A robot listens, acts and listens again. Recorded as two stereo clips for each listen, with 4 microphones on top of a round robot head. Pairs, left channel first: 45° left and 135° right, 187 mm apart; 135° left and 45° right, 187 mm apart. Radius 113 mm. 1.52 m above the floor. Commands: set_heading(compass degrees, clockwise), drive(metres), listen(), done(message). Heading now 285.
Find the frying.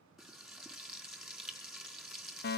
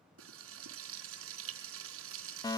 set_heading(330)
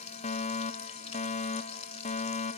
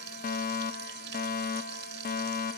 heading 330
set_heading(340)
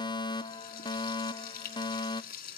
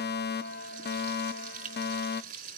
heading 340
done("Facing the frying, 2 to 4 m away.")